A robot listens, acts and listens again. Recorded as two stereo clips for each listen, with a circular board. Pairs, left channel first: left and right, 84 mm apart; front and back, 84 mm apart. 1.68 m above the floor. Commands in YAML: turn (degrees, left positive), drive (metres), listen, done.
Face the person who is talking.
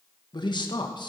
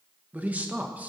turn: 110
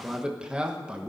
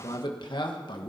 turn: -10
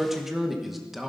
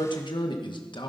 done: "Found it: a man speaking, straight ahead."